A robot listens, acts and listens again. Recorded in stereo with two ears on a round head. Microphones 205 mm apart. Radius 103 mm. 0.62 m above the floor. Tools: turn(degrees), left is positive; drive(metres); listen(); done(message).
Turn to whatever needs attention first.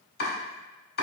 listen()
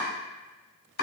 listen()
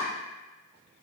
done("I can't make out anything urgent to turn to.")